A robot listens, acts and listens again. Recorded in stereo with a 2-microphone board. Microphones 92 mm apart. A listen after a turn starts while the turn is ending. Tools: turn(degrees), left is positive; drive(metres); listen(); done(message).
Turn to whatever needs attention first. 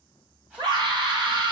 turn(degrees=-60)
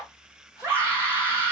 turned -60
turn(degrees=-30)
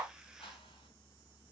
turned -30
listen()
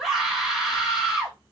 done("Facing the scream, 2 to 4 m away.")